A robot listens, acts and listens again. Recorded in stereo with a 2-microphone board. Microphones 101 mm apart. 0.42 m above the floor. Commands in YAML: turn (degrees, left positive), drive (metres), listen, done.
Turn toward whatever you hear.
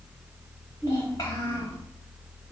turn: 40
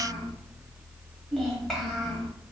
done: "Found it: a child speaking, straight ahead, 1 to 2 m away."